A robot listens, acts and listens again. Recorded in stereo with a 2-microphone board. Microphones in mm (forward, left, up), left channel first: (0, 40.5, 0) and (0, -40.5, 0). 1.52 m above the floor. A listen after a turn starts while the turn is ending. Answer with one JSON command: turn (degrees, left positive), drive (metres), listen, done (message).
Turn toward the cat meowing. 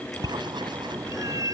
{"turn": -50}
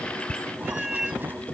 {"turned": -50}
{"done": "Facing the cat meowing."}